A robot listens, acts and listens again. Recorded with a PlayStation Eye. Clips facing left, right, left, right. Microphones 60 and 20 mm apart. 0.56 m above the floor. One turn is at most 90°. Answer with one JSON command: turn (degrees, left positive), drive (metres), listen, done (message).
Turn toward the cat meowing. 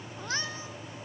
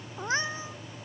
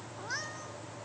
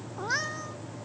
{"turn": -25}
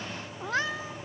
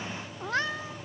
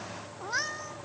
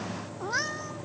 {"done": "Found it: a cat meowing, straight ahead."}